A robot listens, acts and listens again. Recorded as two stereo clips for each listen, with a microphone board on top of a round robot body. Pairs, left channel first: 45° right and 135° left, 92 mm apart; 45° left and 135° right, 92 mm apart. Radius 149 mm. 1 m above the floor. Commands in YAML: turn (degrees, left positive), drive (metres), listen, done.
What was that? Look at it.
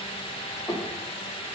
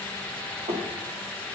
turn: -120
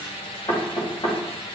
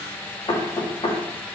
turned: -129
turn: 10
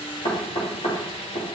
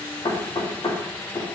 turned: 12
done: "Found it: knocking, straight ahead."